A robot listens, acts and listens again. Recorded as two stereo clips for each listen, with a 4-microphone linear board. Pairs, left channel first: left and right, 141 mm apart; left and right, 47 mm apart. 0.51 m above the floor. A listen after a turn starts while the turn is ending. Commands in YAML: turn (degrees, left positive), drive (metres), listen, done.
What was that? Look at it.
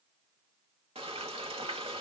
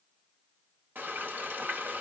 turn: -45
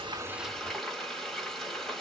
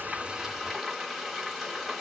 done: "Found it: frying, straight ahead, 1 to 2 m away."